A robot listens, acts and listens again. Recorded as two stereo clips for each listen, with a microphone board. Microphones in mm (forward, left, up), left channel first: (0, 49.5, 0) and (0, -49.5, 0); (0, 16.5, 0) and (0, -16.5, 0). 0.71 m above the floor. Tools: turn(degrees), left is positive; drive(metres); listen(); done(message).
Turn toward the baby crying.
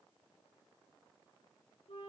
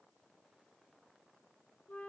listen()
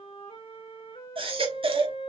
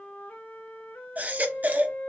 turn(degrees=-65)
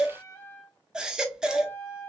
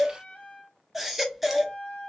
turn(degrees=-10)
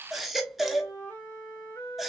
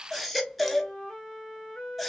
done("Found it: a baby crying, straight ahead.")